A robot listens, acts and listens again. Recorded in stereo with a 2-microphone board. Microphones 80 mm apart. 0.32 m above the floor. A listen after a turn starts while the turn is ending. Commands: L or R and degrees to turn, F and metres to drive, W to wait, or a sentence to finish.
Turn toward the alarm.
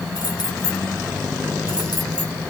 W
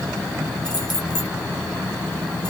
W
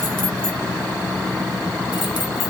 I can't make out an alarm.